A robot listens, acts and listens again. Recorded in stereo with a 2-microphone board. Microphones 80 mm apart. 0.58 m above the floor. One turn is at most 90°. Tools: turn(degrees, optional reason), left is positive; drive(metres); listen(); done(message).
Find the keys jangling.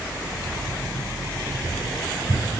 turn(degrees=-40, reason="The keys jangling: about 40° right or 140° right.")
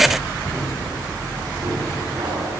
turn(degrees=-90, reason="So it is at 115° right.")
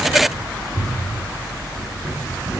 turn(degrees=-25, reason="The keys jangling is now 25° right.")
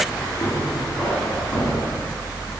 done("Facing the keys jangling, over 4 m away.")